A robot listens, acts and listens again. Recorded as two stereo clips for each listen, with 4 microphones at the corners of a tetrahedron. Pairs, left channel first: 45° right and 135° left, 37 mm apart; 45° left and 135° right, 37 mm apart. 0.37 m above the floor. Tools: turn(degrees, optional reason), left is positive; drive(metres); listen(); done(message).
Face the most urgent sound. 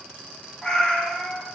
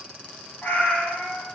listen()
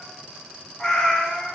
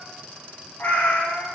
listen()
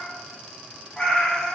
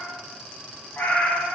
done("I can't make out anything urgent to turn to.")